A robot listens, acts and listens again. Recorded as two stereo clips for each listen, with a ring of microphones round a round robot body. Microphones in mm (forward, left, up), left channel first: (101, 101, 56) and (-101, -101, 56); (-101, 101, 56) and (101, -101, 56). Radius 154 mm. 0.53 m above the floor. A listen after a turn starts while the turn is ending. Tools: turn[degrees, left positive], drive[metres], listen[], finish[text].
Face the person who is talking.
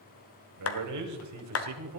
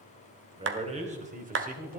Thought: The man speaking: 105° right.
Action: turn[-105]
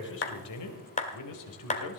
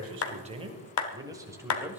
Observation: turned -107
Thought: The man speaking is now 40° left.
Action: turn[40]
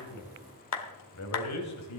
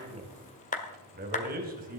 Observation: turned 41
Thought: The man speaking is now 15° left.
Action: turn[15]
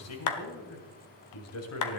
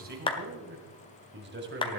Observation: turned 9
Thought: The man speaking is now 10° left.
Action: turn[10]
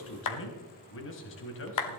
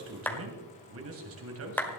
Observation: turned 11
Action: finish[Facing the man speaking.]